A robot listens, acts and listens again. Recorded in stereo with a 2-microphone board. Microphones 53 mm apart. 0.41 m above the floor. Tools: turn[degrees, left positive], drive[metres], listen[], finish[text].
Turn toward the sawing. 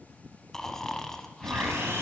Thought: The sawing: about 50° right or 130° right.
Action: turn[-50]
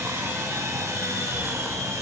Thought: So it is at 80° right.
Action: turn[-80]
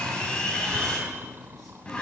Thought: The sawing is now 20° left.
Action: turn[20]
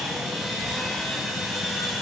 Action: finish[Facing the sawing, 2 to 4 m away.]